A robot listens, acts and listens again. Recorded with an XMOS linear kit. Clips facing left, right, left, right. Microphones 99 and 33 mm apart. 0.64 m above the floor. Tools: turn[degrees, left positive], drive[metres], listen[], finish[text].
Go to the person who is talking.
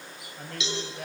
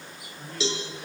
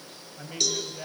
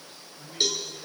Thought: The man speaking: about 65° left or 115° left.
Action: turn[65]
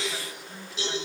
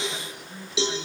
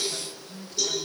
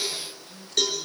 Action: drive[1.0]
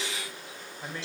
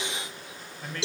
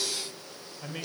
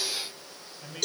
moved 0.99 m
Thought: The man speaking is now 15° left.
Action: turn[15]
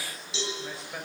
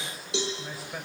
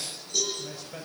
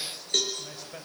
Action: drive[1.0]
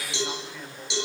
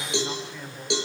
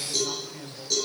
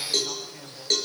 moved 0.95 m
Action: drive[1.0]
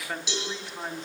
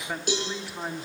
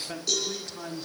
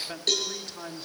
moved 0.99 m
Thought: The man speaking is now 10° right.
Action: turn[-10]
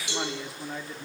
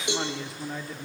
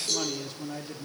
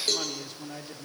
Action: drive[1.0]
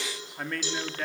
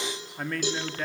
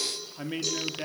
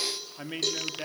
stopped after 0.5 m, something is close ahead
Action: finish[I am next to the man speaking.]